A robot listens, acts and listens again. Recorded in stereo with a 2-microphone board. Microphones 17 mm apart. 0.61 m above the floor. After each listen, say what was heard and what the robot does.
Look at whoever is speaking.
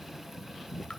Keep listening.
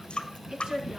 The woman speaking: about 65° right or 115° right. Turn 65° right.
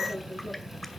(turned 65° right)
Found it: a woman speaking, straight ahead.